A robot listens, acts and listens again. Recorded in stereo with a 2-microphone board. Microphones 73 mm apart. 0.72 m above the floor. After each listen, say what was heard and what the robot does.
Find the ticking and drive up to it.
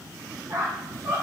Keep listening.
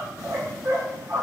Keep listening.
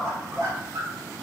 I can't make out ticking, only a squeak.